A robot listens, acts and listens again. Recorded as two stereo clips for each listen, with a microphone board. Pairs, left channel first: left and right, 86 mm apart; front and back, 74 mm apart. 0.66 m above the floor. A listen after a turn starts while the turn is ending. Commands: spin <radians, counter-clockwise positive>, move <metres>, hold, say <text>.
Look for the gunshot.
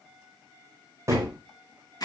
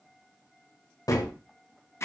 spin -0.61
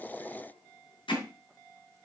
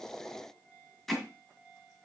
say Facing where the gunshot came from. I can't hear it now.